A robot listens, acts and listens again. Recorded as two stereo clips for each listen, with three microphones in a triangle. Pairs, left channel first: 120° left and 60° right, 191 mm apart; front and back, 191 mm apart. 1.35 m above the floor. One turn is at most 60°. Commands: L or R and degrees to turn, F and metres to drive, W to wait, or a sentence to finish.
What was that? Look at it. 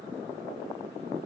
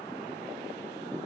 W
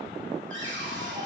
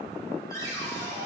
R60
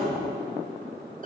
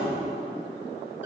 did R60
R15
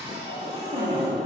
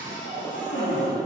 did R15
Facing the cupboard door.